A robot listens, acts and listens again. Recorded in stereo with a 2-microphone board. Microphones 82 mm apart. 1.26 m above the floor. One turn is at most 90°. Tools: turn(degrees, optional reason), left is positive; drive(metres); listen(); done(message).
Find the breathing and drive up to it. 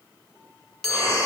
turn(degrees=40, reason="The breathing: about 40° left or 140° left.")
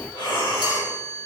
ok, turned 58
turn(degrees=85, reason="So it is at 85° left.")
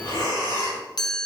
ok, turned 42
turn(degrees=40, reason="The breathing is now 40° left.")
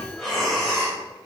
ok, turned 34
drive(metres=1.0)
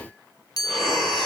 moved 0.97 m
drive(metres=1.0)
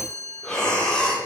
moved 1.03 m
turn(degrees=10, reason="The breathing is now 10° left.")
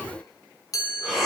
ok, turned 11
drive(metres=1.0)
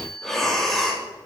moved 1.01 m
drive(metres=1.0)
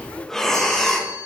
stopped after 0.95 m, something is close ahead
done("Arrived at the breathing, straight ahead.")